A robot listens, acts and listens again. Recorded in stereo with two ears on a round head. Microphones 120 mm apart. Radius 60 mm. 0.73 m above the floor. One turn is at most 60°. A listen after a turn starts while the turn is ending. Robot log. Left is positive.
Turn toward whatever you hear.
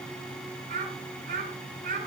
note: The child speaking: about 70° right or 110° right.
cmd yaw -60
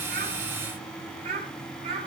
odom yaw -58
note: So it is at 40° right.
cmd yaw -40
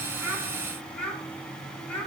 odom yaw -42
note: The child speaking is now 10° left.
cmd yaw +10
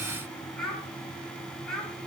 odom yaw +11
end: Facing the child speaking, over 4 m away.